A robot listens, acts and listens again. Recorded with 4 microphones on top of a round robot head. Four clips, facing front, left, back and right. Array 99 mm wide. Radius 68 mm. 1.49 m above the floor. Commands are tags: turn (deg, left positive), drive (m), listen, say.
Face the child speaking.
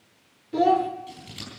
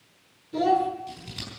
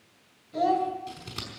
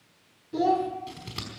<turn deg="-15"/>
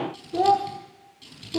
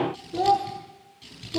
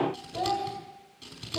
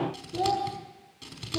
<turn deg="20"/>
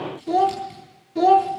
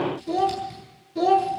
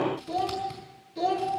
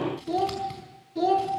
<say>Found it: a child speaking, straight ahead, 2 to 4 m away.</say>